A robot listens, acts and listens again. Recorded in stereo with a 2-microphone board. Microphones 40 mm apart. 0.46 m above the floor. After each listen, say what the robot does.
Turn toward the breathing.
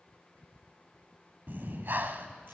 Turn 55° right.
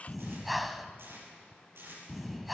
Found it: breathing, straight ahead, under 1 m away.